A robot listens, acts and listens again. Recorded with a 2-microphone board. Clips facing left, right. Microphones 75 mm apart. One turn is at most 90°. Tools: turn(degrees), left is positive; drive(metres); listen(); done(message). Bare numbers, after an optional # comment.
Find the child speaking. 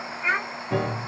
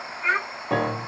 turn(30)
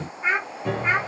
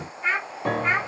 turn(30)
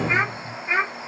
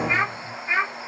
turn(30)
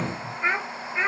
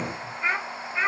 turn(30)
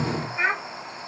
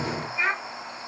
# So it is at 145° left.
turn(90)
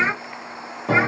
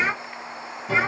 # The child speaking is now 55° left.
turn(55)
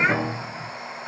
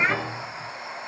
# The child speaking is now 10° left.
turn(10)
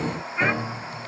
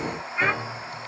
listen()
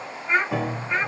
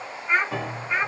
done("Facing the child speaking.")